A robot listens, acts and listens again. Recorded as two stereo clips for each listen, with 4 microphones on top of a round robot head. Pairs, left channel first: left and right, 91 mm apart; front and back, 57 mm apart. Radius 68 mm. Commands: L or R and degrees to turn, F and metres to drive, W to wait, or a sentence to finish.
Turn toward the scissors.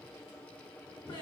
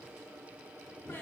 W
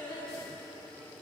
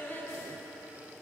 W
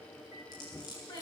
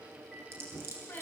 L140
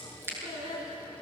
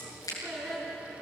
R25
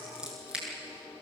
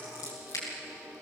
R10
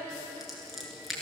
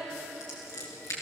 Facing the scissors, over 4 m away.